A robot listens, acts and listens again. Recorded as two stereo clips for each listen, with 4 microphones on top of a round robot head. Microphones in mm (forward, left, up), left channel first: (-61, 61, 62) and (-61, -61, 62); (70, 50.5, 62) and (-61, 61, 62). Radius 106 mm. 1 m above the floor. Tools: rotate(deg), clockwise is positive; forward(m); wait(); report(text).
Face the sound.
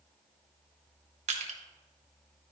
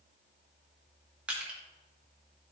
rotate(105)
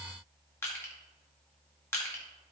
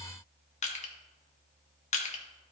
rotate(-20)
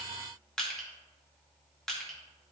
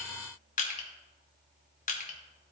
report("Facing the crushing, 1 to 2 m away.")